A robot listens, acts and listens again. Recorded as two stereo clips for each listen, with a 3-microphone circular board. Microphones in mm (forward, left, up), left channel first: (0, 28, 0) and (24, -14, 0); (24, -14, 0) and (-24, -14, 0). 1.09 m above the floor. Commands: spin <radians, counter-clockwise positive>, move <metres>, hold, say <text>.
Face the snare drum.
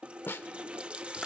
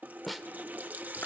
spin 1.57
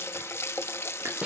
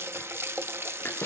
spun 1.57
say Found it: a snare drum, straight ahead.